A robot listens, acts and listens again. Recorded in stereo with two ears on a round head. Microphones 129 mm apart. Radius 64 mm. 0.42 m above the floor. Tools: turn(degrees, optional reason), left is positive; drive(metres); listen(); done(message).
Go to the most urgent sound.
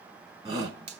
turn(degrees=-30, reason="The shout: about 30° right or 150° right.")
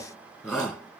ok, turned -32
drive(metres=1.0)
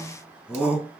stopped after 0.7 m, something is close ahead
done("Something is in my way. I am facing the shout but have not reached it.")